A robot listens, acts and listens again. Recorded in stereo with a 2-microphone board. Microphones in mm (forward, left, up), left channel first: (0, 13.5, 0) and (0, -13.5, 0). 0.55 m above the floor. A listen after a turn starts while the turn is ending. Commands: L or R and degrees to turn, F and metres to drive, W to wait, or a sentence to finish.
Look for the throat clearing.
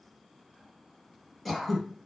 L30
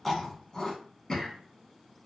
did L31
L145
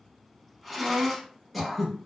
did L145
Found it: throat clearing, straight ahead.